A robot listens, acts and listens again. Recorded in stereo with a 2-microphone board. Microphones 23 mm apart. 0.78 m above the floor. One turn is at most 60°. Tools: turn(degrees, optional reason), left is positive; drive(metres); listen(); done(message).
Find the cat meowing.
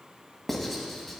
listen()
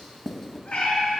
turn(degrees=60, reason="The cat meowing: about 65° left or 115° left.")
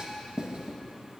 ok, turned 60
listen()
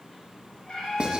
turn(degrees=50, reason="So it is at 50° left.")
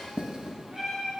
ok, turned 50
turn(degrees=-30, reason="The cat meowing is now 30° right.")
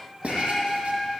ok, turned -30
turn(degrees=10, reason="The cat meowing is now 10° left.")
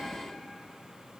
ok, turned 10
listen()
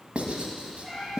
done("Found it: a cat meowing, straight ahead, over 4 m away.")